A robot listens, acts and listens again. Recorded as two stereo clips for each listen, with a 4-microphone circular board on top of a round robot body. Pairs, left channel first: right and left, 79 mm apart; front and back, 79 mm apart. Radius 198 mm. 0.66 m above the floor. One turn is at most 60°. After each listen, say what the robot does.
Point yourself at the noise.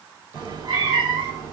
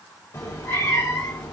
Turn 40° left.
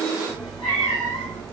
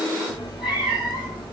Turn 15° right.
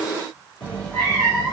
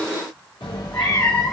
Turn 15° right.
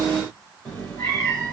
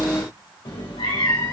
Turn 10° right.
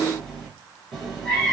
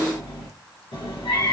Found it: a cat meowing, straight ahead.